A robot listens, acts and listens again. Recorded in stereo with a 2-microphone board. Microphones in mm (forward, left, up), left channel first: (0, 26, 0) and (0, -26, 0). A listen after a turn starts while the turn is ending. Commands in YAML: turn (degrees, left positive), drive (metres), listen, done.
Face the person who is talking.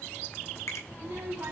turn: -60
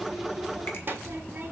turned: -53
turn: -50
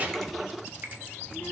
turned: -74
turn: 25
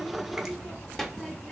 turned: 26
done: "Facing the child speaking."